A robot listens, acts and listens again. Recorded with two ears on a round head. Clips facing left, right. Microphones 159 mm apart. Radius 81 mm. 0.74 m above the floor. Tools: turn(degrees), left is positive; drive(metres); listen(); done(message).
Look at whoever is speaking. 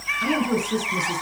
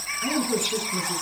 turn(degrees=60)
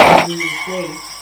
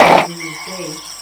done("Found it: a woman speaking, straight ahead, over 4 m away.")